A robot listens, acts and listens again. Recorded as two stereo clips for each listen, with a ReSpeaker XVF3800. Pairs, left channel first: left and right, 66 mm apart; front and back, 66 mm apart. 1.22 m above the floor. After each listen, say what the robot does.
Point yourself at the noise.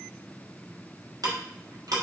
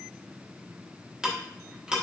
Turn 105° right.
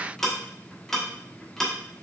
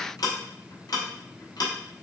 Found it: ticking, straight ahead, 1 to 2 m away.